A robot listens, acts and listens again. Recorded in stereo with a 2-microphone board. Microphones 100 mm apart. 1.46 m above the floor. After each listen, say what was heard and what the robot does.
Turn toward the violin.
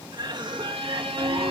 The violin: about 70° right or 110° right. Turn 70° right.
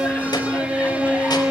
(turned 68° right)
So it is at 15° right. Turn 15° right.
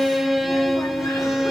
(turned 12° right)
Facing the violin, 1 to 2 m away.